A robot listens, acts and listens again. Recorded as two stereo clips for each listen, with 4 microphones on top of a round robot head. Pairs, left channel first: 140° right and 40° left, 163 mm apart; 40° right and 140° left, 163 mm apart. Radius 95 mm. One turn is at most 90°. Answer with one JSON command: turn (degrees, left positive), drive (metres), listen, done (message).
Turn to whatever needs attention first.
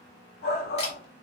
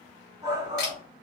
{"turn": -90}
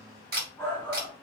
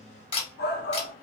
{"turn": -60}
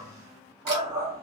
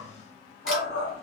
{"turn": -25}
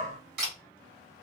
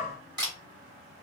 {"done": "Found it: a shout, straight ahead."}